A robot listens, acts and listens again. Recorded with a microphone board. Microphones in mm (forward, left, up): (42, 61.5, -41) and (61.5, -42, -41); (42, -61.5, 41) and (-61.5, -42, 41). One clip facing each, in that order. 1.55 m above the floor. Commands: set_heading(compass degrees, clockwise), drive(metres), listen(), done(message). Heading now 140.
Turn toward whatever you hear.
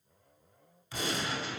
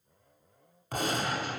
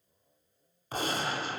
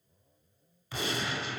set_heading(190)
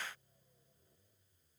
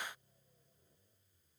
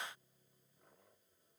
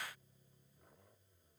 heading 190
done("Facing where the gunshot came from. I can't hear it now.")